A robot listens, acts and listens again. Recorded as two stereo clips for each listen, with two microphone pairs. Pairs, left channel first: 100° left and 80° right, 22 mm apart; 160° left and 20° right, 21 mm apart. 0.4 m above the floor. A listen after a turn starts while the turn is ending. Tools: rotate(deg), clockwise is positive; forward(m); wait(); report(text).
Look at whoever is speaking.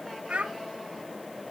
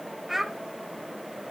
rotate(95)
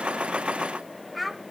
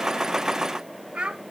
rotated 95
rotate(-15)
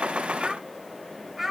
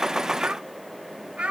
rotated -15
report("Found it: a child speaking, straight ahead, 1 to 2 m away.")